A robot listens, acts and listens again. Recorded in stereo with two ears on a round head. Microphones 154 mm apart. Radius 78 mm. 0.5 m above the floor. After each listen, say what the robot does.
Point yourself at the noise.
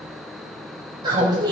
Turn 25° right.
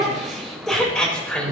Turn 10° left.
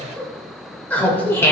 Turn 15° left.
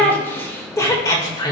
Turn 25° left.
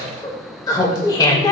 Turn 25° left.
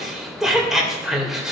Facing the laughter, 2 to 4 m away.